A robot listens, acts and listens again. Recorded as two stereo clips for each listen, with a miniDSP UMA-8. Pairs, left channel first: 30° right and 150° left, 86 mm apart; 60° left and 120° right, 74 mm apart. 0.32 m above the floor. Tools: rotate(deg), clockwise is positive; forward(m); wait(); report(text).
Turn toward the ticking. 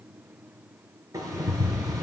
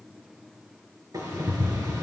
rotate(160)
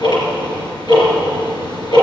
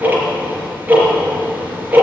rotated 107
rotate(50)
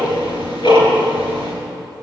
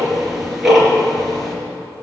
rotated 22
rotate(30)
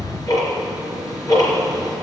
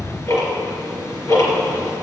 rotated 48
rotate(-15)
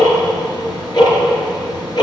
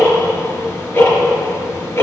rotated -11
report("Facing the ticking.")